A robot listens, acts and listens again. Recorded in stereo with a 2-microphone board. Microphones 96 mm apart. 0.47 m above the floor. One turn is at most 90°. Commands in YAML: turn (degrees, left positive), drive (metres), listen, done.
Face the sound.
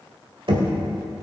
turn: -60
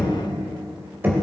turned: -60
turn: -20
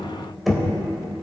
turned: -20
done: "Found it: knocking, straight ahead."